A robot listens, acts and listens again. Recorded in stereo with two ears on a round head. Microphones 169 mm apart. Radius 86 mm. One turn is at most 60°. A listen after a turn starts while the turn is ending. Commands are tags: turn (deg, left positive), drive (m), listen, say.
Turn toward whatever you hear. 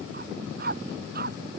<turn deg="-50"/>
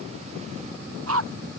<turn deg="-60"/>
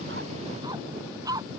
<turn deg="-20"/>
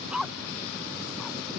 <say>Facing the dog barking.</say>